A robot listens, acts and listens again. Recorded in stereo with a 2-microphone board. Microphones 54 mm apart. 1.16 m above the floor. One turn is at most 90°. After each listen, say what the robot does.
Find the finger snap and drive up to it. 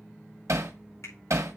Turn 90° left.
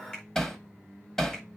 Keep listening.
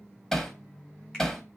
Keep listening.
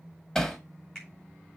Turn 15° left.
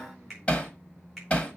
Drive 1.0 m forward.
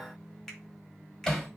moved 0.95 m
Drive 1.0 m forward.
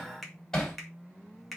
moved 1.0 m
Drive 1.0 m forward.
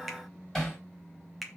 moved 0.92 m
Drive 1.0 m forward.
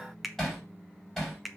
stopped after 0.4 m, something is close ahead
I am next to the finger snap.